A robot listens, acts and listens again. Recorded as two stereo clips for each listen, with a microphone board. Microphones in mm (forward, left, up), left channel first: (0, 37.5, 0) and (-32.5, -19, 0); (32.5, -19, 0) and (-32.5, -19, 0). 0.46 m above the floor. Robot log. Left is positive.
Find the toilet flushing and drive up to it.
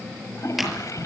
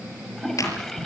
note: The toilet flushing: 85° left.
cmd yaw +85
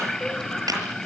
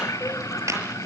note: The toilet flushing is now 20° right.
cmd yaw -20
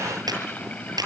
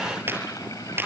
cmd idle
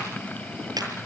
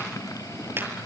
cmd idle
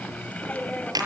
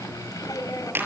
cmd fwd 1.0
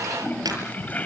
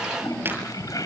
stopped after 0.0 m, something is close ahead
end: Blocked. The toilet flushing is further on, straight ahead.